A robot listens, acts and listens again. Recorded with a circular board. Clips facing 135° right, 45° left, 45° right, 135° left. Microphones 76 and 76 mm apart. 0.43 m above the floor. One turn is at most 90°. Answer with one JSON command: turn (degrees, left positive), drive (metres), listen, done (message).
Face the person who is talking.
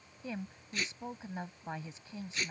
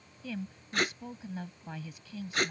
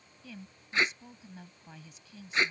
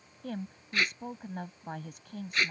{"turn": 90}
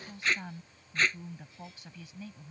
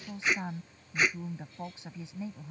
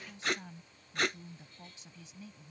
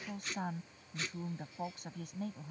{"turn": 90}
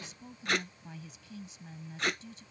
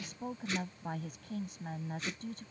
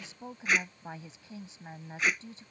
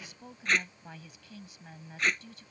{"turn": 15}
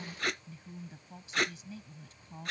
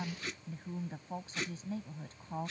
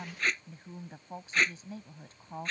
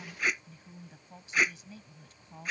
{"done": "Facing the woman speaking."}